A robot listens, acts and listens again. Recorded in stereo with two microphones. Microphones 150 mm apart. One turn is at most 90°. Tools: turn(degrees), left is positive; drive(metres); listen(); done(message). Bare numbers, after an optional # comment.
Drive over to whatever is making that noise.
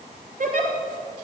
# The giggle: about 65° right or 115° right.
turn(-65)
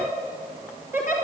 # So it is at 15° right.
turn(-15)
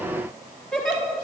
drive(1.0)
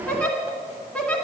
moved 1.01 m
# The giggle is now 10° left.
turn(10)
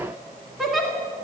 drive(1.0)
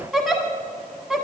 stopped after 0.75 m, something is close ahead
done("I am next to the giggle.")